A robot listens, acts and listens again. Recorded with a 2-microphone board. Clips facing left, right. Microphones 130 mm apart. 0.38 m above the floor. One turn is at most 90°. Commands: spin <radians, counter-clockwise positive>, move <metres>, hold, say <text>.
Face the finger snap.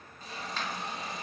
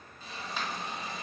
spin -0.52
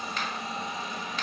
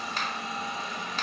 spin -1.57
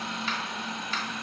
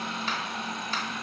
spin -0.87
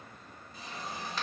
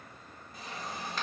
hold
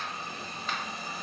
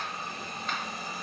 say I heard a finger snap from this way, but can't make it out now.